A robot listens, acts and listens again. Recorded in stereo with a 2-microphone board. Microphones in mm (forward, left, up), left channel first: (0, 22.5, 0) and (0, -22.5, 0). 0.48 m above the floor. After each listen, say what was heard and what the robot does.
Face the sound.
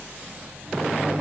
The microwave: about 30° right or 150° right. Turn 30° right.
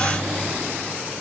Facing the microwave, 2 to 4 m away.